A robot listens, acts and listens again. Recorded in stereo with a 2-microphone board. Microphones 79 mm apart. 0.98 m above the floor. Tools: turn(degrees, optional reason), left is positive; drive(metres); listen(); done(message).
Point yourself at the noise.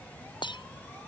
turn(degrees=90)
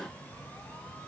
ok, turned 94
done("I heard breaking glass from this way, but can't make it out now.")